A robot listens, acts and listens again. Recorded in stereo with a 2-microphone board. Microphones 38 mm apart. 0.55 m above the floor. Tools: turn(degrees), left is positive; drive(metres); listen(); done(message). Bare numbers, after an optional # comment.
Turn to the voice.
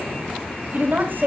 # The woman speaking: about 60° right or 120° right.
turn(-60)
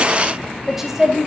# So it is at 10° right.
turn(-10)
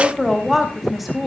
done("Found it: a woman speaking, straight ahead, 2 to 4 m away.")